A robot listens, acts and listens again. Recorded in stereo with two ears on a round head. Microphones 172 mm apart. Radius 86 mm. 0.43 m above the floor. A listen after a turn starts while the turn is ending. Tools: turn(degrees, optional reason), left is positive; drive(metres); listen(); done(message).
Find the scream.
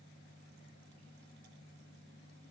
listen()
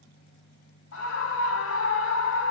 turn(degrees=75, reason="The scream: about 75° left or 105° left.")
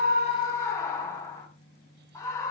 turn(degrees=15, reason="So it is at 15° left.")
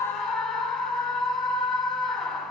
done("Found it: a scream, straight ahead, 2 to 4 m away.")